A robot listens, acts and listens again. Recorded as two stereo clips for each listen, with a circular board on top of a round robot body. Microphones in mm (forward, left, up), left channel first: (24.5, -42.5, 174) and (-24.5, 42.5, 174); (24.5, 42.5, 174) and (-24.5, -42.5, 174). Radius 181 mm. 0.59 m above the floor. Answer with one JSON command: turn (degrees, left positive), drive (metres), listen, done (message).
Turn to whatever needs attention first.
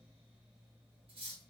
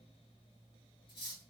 {"listen": true}
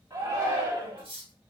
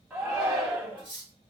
{"turn": 160}
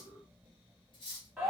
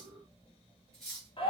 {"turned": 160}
{"turn": 35}
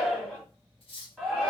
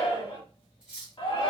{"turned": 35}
{"turn": 20}
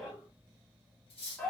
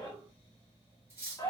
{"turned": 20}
{"done": "Found it: a shout, straight ahead, 1 to 2 m away."}